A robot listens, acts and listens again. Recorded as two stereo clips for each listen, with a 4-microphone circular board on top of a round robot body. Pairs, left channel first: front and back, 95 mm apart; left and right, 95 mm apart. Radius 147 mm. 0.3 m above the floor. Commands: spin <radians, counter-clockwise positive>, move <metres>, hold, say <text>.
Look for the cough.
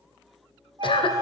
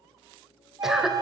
say Found it: a cough, straight ahead.